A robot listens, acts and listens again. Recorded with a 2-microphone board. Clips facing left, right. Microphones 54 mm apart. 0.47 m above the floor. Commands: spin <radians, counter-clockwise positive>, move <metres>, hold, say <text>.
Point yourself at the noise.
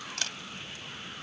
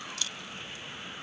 spin 1.05
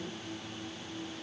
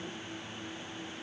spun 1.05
hold
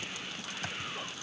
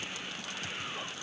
hold
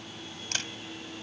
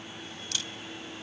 spin 0.96
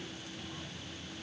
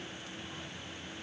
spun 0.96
hold
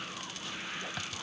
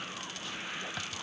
say Found it: a camera shutter, straight ahead.